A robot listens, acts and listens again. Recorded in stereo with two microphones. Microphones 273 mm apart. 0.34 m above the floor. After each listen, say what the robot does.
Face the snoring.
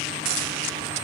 Keep listening.
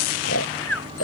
Turn 60° left.
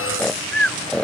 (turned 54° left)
Facing the snoring.